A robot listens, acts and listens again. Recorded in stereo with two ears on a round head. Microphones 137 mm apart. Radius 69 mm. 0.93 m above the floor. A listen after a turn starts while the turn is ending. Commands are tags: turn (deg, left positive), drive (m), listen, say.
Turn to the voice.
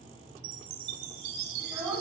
<turn deg="-20"/>
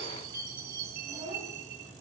<turn deg="-140"/>
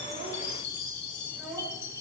<say>Facing the child speaking.</say>